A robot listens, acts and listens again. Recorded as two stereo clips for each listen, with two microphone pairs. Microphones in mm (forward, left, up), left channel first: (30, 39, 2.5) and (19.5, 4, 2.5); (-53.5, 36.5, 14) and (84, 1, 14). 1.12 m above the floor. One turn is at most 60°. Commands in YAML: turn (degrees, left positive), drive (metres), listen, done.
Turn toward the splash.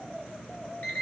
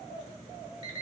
listen: true
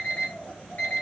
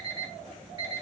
listen: true
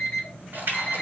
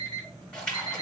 turn: -60
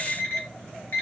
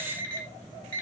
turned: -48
turn: -60
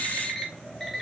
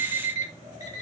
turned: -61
done: "I heard a splash from this way, but can't make it out now."